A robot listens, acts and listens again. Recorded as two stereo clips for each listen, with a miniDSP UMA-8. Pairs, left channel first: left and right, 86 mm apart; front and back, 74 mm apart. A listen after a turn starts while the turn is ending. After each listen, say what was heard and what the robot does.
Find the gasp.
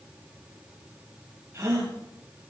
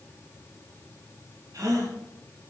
The gasp: 145° right. Turn 145° right.
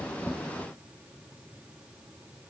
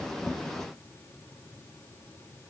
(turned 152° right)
I heard a gasp from this way, but can't make it out now.